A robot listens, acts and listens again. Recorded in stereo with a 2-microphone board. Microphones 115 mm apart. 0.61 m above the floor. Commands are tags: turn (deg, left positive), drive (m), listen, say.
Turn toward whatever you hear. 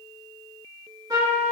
<turn deg="-30"/>
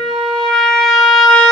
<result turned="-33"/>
<say>Found it: a trumpet, straight ahead.</say>